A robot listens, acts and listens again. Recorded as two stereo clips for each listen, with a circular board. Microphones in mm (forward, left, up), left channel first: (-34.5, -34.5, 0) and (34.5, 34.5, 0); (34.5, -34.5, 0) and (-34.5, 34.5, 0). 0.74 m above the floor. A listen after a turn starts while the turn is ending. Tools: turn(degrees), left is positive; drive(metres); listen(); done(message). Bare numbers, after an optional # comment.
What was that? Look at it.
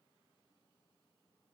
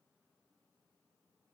listen()
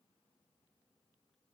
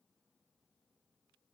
listen()
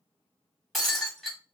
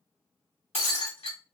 # The breaking glass: 50° right.
turn(-50)
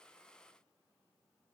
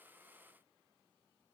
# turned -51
done("I heard breaking glass from this way, but can't make it out now.")